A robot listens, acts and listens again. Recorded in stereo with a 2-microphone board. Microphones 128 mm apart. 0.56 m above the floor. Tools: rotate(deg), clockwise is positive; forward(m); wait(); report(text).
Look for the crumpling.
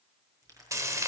rotate(25)
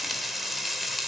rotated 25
wait()
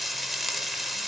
wait()
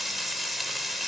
report("I heard crumpling, but can't make it out now. It was about straight ahead or 130° right.")